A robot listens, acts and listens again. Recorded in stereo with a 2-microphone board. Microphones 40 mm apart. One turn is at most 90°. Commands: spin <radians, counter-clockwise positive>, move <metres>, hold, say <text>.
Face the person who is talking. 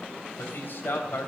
spin 1.13
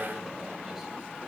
hold
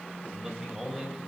say Found it: a man speaking, straight ahead.